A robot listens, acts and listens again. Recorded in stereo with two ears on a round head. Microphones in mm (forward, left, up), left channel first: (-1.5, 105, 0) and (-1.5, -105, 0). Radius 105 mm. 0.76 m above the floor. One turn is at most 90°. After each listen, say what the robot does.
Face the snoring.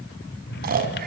Turn 40° right.
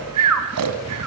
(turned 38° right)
Turn 90° right.
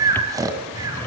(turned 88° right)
Turn 15° right.
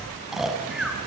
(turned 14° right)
Facing the snoring, 2 to 4 m away.